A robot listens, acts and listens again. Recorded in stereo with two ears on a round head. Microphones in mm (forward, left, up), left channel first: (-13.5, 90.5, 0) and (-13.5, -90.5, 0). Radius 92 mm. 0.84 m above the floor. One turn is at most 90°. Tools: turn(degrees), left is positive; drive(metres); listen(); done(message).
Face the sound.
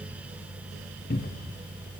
turn(degrees=50)
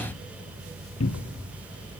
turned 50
turn(degrees=80)
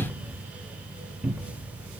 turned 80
done("Facing the cupboard door, under 1 m away.")